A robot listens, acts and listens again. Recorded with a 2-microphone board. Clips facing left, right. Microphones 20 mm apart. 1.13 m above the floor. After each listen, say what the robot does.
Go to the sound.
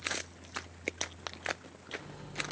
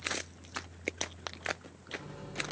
Turn 30° left.
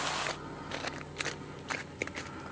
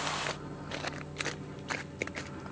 Turn 135° left.
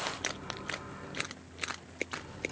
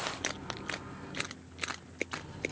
Turn 10° right.
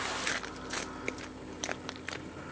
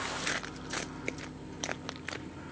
Drive 1.0 m forward.
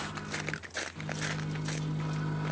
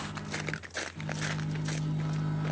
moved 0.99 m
Drive 1.0 m forward.
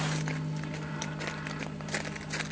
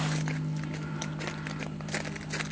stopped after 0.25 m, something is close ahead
Arrived at the microwave, straight ahead.